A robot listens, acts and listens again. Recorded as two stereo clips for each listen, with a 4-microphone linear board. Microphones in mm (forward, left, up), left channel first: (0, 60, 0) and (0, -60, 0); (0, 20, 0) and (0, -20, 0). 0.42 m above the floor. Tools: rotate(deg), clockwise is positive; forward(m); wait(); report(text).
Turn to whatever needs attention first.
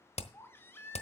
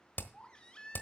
rotate(-20)
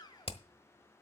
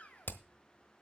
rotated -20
rotate(-140)
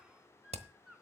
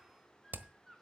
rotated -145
report("Found it: a baby crying, straight ahead, 1 to 2 m away.")